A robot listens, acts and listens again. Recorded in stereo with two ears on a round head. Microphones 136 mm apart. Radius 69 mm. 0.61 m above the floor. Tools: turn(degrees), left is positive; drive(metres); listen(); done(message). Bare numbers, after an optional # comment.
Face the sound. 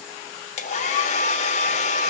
# The hair dryer: about 50° left or 130° left.
turn(50)
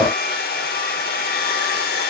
# So it is at 75° left.
turn(75)
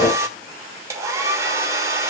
# The hair dryer is now 20° right.
turn(-20)
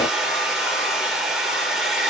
done("Facing the hair dryer, 1 to 2 m away.")